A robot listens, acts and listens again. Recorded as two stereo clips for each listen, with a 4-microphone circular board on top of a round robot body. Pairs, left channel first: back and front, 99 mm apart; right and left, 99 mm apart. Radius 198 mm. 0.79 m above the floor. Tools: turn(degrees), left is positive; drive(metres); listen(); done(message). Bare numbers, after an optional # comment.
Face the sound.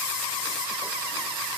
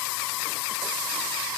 listen()
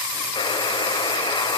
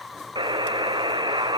# The buzzer: 135° left.
turn(135)
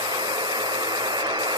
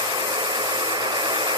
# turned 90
# The buzzer is now 45° left.
turn(45)
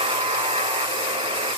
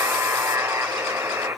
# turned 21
# The buzzer is now 25° left.
turn(25)
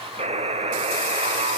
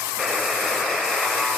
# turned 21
done("Found it: a buzzer, straight ahead.")